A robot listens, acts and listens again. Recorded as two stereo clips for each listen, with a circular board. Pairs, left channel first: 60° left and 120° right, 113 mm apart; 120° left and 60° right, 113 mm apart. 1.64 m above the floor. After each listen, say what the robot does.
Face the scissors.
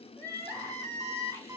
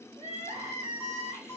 Keep listening.
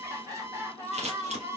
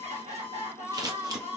Turn 115° right.
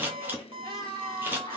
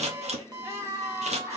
Turn 50° right.
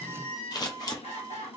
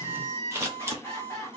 Facing the scissors, 1 to 2 m away.